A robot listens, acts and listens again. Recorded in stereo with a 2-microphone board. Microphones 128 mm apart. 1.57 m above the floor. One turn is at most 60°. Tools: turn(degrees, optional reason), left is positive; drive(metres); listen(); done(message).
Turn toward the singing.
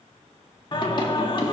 turn(degrees=40, reason="The singing: about 40° left or 140° left.")
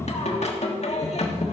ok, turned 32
turn(degrees=60, reason="So it is at 100° left.")
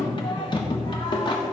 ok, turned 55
turn(degrees=45, reason="The singing is now 45° left.")
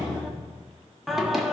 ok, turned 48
done("Found it: singing, straight ahead.")